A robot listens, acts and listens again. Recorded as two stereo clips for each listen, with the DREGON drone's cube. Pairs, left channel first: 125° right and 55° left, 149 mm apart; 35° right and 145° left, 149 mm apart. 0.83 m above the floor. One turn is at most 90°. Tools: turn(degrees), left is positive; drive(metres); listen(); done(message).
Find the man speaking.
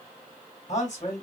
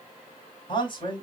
turn(degrees=-85)
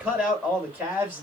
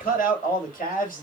turn(degrees=-20)
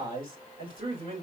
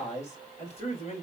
turn(degrees=10)
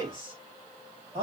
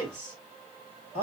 done("Facing the man speaking.")